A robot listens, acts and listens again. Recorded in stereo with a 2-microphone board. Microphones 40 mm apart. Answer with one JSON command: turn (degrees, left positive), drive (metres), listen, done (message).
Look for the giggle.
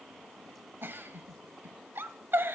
{"turn": -60}
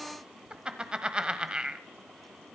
{"turn": -25}
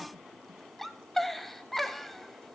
{"done": "Facing the giggle, 1 to 2 m away."}